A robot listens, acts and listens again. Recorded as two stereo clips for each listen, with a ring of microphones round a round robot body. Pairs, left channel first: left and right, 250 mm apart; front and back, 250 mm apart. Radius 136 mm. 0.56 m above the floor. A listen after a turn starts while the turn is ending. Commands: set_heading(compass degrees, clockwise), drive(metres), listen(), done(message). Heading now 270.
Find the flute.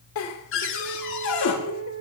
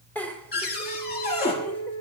set_heading(315)
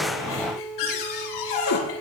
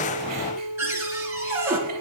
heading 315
done("Found it: a flute, straight ahead.")